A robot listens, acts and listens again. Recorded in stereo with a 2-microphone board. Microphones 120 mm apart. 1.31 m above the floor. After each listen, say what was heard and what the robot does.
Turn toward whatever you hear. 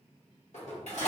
The dishes clattering: about 70° left or 110° left. Turn 70° left.
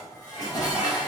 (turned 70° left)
So it is at 35° left. Turn 35° left.
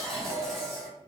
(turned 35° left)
Found it: dishes clattering, straight ahead.